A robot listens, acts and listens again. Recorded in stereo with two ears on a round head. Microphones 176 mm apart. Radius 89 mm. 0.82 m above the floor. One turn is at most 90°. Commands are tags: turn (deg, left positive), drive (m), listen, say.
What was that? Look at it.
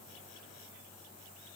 <listen/>
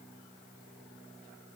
<listen/>
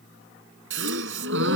<turn deg="-70"/>
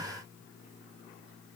<listen/>
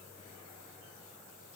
<say>I heard a gasp, but can't make it out now. It was about straight ahead or 40° right.</say>